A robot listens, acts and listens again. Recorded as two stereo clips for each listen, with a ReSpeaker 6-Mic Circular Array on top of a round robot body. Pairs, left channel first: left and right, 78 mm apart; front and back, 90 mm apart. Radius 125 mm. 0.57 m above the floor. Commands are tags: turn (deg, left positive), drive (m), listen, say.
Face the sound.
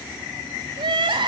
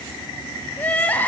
<turn deg="-75"/>
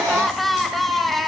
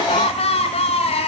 <say>Found it: crying, straight ahead.</say>